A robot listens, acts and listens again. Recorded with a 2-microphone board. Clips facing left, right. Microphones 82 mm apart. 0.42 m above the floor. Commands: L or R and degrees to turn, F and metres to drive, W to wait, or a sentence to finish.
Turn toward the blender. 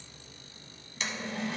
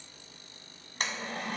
R50
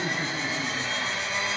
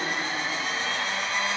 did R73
R55
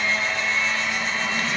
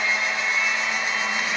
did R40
R15
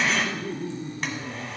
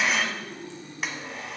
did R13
Found it: a blender, straight ahead, 1 to 2 m away.